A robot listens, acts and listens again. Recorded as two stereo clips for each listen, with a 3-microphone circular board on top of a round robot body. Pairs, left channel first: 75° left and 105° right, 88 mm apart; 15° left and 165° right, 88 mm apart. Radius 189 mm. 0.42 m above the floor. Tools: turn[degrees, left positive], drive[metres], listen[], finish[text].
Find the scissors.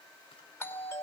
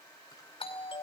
Action: listen[]
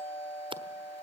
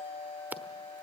Thought: The scissors: 100° right.
Action: turn[-100]
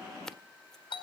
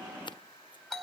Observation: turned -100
Thought: The scissors is now 10° right.
Action: turn[-10]
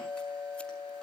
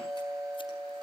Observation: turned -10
Action: listen[]
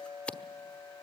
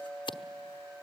Action: finish[Facing the scissors, 1 to 2 m away.]